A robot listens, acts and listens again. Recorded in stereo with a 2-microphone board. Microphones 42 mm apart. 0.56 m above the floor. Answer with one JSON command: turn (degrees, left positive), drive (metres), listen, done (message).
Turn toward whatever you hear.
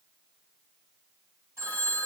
{"turn": -90}
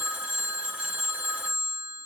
{"turn": -10}
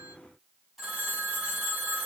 {"done": "Facing the phone ringing, 2 to 4 m away."}